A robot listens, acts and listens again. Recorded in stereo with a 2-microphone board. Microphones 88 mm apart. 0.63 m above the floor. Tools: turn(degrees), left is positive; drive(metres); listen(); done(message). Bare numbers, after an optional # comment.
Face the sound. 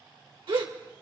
# The gasp: about 75° right or 105° right.
turn(-75)
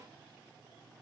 listen()
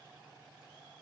done("I heard a gasp, but can't make it out now. It was about straight ahead or 30° right.")